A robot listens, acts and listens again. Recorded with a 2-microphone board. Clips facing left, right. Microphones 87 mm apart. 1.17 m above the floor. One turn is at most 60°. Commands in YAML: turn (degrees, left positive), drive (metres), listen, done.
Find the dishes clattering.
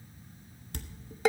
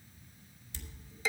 turn: 60
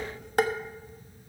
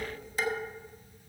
turn: 60
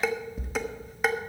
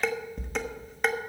done: "Facing the dishes clattering, 1 to 2 m away."